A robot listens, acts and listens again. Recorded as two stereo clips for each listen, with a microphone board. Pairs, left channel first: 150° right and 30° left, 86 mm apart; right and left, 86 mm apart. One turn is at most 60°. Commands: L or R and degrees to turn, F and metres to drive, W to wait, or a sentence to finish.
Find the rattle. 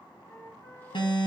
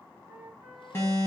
W
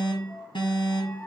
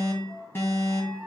W
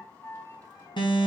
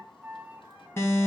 I can't make out a rattle to turn to.